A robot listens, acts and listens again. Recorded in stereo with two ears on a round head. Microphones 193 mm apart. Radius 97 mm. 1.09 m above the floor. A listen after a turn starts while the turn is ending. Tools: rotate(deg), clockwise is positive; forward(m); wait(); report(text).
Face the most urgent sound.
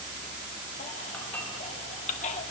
rotate(-35)
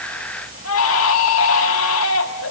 rotate(-110)
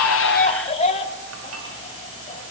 rotate(-30)
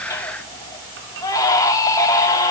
rotate(-15)
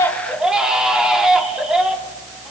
report("Found it: a baby crying, straight ahead, 1 to 2 m away.")